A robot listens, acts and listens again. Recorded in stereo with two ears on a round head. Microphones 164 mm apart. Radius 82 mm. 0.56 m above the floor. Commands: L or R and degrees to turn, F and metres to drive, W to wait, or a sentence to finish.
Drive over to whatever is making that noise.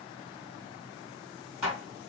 R30
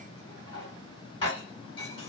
L25
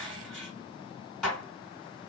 F1.0
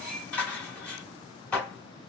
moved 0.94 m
L10
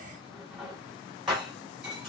F1.0
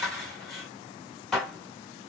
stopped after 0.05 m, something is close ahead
I am next to the dishes clattering.